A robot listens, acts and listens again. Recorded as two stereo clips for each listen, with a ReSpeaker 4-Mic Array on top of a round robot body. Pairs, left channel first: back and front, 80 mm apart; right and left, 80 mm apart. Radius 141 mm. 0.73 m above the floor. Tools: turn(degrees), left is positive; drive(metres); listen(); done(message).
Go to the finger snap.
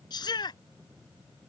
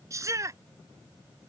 listen()
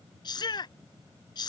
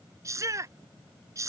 listen()
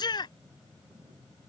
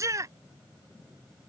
done("I can't make out a finger snap, only a shout.")